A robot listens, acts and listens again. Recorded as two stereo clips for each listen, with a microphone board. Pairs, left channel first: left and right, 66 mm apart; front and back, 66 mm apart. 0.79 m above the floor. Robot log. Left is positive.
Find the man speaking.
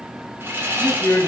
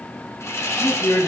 note: The man speaking: 25° left.
cmd yaw +25
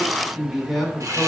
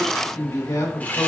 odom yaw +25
end: Found it: a man speaking, straight ahead.